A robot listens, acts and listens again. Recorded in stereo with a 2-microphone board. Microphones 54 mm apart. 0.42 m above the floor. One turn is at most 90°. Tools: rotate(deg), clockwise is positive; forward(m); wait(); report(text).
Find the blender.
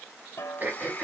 rotate(-30)
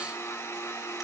rotate(-90)
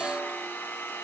rotate(-50)
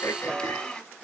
rotate(-20)
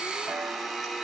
report("Facing the blender.")